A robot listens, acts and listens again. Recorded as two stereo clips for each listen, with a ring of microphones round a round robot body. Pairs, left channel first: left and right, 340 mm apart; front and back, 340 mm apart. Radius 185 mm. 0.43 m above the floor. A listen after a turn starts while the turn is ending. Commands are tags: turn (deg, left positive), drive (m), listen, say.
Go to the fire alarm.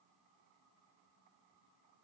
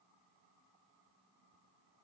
<listen/>
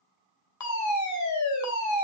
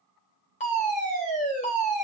<turn deg="65"/>
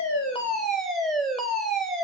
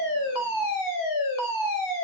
<drive m="1.0"/>
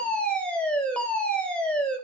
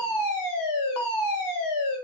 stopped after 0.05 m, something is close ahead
<say>Something is in my way. I am facing the fire alarm but have not reached it.</say>